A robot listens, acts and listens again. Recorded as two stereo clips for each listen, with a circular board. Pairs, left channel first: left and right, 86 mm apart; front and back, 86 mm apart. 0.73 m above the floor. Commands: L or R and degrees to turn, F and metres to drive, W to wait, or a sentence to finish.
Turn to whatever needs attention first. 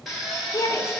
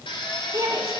L140
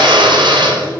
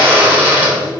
W
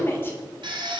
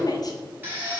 L30
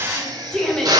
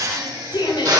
L10
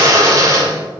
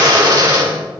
W
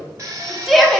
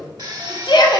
Found it: a shout, straight ahead.